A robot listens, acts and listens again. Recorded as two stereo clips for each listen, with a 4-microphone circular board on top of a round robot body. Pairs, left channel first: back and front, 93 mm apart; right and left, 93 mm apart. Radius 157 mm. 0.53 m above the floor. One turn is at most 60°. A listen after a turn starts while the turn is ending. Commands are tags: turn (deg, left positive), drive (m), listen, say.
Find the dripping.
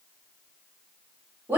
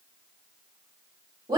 <listen/>
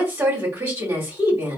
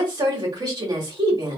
<listen/>
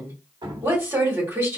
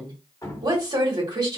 <turn deg="-35"/>
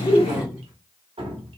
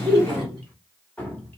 <turn deg="-15"/>
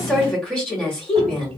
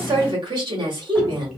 <listen/>
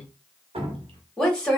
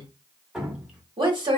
<say>Found it: dripping, straight ahead.</say>